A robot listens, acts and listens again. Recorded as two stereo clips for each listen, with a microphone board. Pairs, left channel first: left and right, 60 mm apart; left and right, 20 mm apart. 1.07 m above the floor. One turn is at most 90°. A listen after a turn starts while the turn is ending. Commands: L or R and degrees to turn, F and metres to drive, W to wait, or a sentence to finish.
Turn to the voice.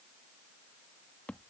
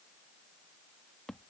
W
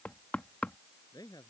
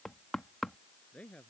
L90
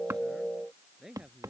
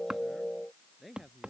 Facing the man speaking.